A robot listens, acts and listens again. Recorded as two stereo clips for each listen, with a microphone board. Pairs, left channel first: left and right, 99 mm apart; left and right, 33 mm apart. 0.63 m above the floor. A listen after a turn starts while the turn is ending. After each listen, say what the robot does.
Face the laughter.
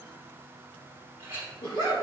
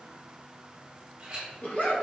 Turn 55° left.
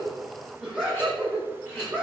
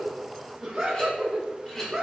Turn 10° right.
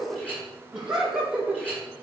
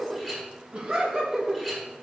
Facing the laughter.